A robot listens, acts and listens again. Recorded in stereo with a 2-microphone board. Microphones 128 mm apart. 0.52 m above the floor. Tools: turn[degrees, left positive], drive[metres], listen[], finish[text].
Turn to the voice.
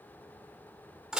Action: listen[]
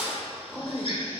Action: turn[30]
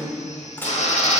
Thought: So it is at 25° right.
Action: turn[-25]
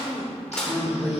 Thought: The woman speaking is now 15° right.
Action: turn[-15]
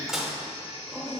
Action: finish[Found it: a woman speaking, straight ahead.]